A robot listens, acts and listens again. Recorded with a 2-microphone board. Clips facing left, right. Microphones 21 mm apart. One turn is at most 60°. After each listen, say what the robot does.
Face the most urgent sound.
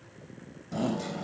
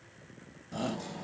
Turn 30° right.
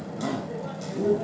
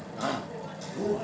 Turn 60° right.
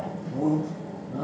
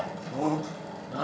Turn 60° right.
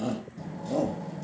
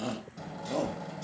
Turn 20° right.
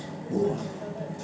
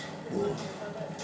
Facing the shout.